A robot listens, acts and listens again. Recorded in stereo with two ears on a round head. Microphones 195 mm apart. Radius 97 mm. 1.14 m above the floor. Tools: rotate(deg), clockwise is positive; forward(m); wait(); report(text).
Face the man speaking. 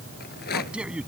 rotate(30)
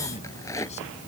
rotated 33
wait()
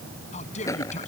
rotate(-35)
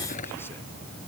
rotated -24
rotate(-10)
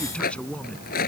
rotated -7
report("Found it: a man speaking, straight ahead.")